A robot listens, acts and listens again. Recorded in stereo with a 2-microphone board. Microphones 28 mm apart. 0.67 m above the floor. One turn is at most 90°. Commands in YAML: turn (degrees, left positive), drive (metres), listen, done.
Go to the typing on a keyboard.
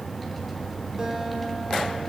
listen: true
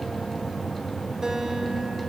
listen: true
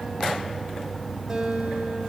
done: "I can't make out typing on a keyboard to turn to."